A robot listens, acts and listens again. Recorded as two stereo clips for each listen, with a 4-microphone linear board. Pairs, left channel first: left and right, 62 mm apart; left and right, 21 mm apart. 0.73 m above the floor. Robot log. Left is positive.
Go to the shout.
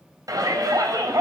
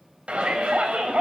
cmd yaw -90
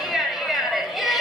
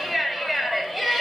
cmd fwd 1.0
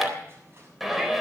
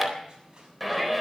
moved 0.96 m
cmd fwd 1.0
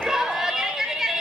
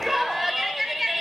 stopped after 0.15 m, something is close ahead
end: Blocked. The shout is further on, straight ahead.